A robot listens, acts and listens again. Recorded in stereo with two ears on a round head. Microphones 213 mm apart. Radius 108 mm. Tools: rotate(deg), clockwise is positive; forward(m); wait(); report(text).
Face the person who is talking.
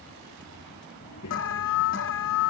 rotate(-90)
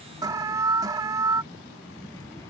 rotate(-10)
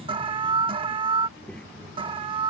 report("Facing the child speaking.")